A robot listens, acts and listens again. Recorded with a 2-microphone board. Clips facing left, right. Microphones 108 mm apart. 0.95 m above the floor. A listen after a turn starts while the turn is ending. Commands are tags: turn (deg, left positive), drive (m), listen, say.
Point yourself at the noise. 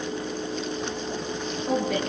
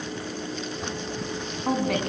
<turn deg="-90"/>
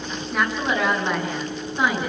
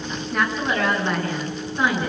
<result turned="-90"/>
<turn deg="10"/>
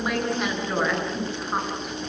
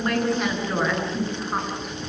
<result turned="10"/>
<say>Found it: a woman speaking, straight ahead.</say>